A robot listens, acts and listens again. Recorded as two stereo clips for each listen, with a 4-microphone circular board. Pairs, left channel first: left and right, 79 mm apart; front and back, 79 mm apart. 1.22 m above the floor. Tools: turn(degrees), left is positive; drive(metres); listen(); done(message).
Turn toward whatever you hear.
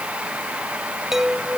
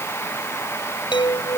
done("Facing the chime.")